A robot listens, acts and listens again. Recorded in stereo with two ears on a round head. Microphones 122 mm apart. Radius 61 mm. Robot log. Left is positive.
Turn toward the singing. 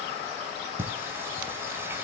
note: The singing: about 15° right or 165° right.
cmd yaw -15
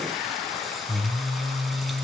end: Facing the singing, 1 to 2 m away.